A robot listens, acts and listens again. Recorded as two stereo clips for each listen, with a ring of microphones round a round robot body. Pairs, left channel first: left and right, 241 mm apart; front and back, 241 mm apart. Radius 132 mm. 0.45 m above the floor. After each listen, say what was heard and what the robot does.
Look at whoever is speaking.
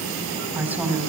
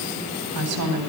The woman speaking: 175° right. Turn 175° right.
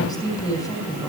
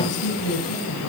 The woman speaking is now 15° left. Turn 15° left.
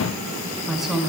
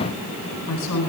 Found it: a woman speaking, straight ahead.